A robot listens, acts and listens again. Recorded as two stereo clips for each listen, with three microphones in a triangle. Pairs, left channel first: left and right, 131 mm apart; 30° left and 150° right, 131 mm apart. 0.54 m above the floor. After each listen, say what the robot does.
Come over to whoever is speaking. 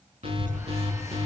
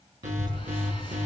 Turn 95° right.
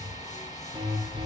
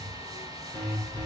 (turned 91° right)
Drive 1.0 m forward.
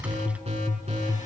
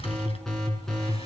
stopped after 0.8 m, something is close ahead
Keep listening.
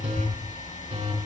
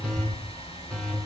Turn 10° right.
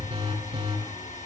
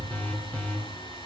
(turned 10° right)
Keep listening.
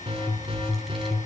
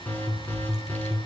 Something is in my way. I am facing the child speaking but have not reached it.